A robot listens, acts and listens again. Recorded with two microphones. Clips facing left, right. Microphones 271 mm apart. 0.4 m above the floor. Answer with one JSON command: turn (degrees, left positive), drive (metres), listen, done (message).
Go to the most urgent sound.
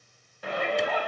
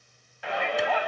{"turn": 45}
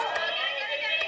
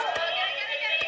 {"turn": 80}
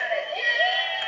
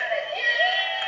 {"drive": 1.0}
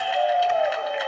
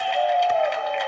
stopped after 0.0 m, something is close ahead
{"done": "Something is in my way. I am facing the shout but have not reached it."}